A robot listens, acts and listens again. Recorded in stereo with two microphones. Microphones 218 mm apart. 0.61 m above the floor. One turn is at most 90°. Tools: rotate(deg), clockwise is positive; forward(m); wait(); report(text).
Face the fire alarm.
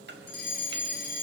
rotate(-50)
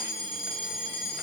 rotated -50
report("Facing the fire alarm.")